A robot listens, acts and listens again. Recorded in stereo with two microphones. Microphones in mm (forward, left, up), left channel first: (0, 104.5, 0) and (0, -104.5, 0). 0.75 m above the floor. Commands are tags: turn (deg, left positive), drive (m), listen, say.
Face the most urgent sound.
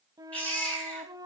<turn deg="30"/>
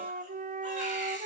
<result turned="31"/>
<listen/>
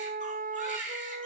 <turn deg="145"/>
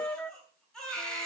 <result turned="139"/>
<say>Found it: a baby crying, straight ahead, over 4 m away.</say>